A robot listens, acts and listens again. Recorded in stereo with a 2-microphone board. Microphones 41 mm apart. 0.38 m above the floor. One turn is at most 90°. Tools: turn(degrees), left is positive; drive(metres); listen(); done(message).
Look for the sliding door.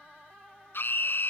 listen()
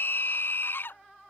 listen()
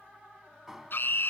turn(degrees=-30)
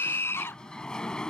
turn(degrees=20)
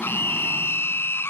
listen()
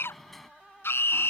done("Found it: a sliding door, straight ahead.")